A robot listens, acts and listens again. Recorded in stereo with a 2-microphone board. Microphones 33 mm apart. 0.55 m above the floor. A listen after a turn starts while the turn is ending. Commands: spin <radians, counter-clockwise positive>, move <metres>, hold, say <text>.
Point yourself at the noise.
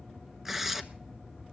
spin -0.52
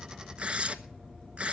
spin -2.44
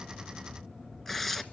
spin 0.17
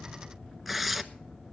say Found it: tearing paper, straight ahead.